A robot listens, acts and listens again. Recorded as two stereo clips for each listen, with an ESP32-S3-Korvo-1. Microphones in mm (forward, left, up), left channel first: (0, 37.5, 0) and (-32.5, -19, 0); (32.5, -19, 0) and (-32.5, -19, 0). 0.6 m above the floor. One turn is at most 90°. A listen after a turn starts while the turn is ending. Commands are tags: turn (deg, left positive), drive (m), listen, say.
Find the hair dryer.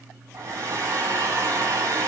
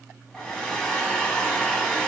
<turn deg="-75"/>
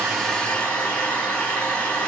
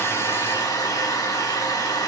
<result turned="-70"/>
<turn deg="-10"/>
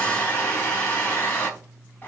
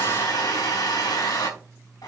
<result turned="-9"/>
<say>Found it: a hair dryer, straight ahead.</say>